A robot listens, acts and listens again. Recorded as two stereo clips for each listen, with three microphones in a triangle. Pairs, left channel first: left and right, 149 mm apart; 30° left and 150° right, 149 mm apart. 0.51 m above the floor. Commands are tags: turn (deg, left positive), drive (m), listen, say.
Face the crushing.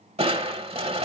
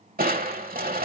<turn deg="-140"/>
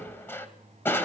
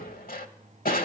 <turn deg="15"/>
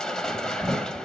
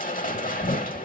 <say>Found it: crushing, straight ahead.</say>